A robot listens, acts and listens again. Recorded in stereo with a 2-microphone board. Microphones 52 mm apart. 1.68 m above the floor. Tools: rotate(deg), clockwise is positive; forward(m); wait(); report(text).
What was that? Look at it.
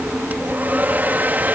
rotate(30)
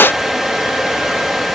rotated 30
report("Found it: a hair dryer, straight ahead.")